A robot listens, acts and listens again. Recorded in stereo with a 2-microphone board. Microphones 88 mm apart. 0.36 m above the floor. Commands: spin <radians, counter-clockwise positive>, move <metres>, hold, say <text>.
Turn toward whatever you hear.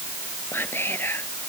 spin 0.44
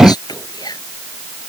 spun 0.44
spin 2.27
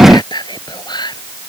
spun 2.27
spin 0.96
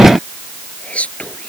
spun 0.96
spin 0.26
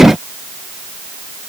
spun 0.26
hold
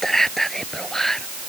say Found it: whispering, straight ahead.